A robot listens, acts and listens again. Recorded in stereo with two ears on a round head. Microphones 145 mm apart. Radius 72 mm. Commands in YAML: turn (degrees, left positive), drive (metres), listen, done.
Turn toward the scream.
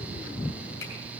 listen: true
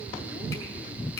listen: true
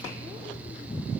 done: "I can't make out a scream to turn to."